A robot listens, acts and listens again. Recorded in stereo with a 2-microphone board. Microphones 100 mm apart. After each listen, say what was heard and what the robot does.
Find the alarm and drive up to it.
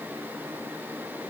Keep listening.
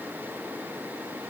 Keep listening.
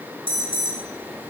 The alarm: about 55° right or 125° right. Turn 55° right.
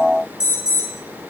Drive 1.0 m forward.
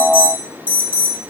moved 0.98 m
The alarm is now 15° right. Turn 15° right.
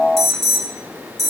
Drive 1.0 m forward.
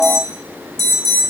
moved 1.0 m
Drive 1.0 m forward.
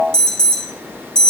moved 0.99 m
The alarm is now 10° left. Turn 10° left.
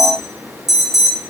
Drive 1.0 m forward.
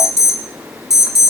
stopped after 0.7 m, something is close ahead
I am next to the alarm.